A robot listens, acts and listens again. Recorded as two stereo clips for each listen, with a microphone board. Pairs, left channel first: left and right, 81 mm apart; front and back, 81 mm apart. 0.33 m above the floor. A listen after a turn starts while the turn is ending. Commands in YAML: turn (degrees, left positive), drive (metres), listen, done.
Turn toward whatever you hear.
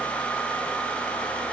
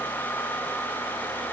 listen: true
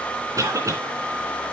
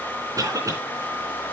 turn: -135
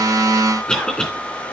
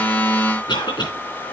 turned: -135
turn: 10
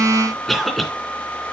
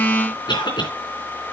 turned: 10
done: "Found it: a cough, straight ahead, 2 to 4 m away."